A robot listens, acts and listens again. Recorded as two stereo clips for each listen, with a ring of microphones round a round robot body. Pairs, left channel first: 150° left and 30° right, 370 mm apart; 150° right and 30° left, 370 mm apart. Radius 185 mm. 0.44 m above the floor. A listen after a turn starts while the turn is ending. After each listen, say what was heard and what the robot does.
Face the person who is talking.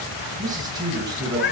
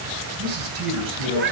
The man speaking: 50° left. Turn 50° left.
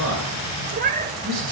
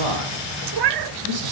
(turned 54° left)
Facing the man speaking.